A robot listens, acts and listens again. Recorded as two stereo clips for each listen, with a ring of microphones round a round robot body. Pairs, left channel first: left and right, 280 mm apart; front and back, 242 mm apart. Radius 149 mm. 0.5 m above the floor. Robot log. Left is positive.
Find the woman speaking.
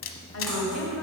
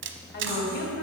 note: The woman speaking: 50° left.
cmd yaw +50
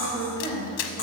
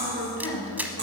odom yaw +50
note: The woman speaking is now 15° left.
cmd yaw +15
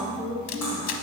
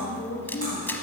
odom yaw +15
note: The woman speaking is now 10° left.
cmd yaw +10
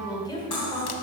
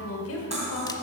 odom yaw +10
note: The woman speaking is now 20° left.
cmd yaw +20
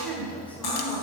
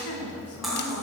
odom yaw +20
note: The woman speaking is now 10° left.
cmd yaw +10
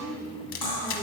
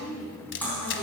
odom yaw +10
note: The woman speaking is now 20° left.
cmd yaw +20
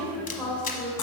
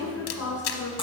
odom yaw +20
end: Found it: a woman speaking, straight ahead, 2 to 4 m away.